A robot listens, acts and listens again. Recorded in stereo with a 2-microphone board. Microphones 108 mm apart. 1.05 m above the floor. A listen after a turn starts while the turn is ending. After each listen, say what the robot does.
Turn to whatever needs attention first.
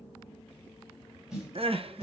Turn 60° right.
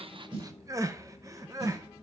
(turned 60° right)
Turn 35° right.
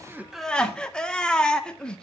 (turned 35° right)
Turn 10° left.
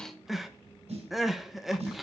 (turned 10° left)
Facing the crying, under 1 m away.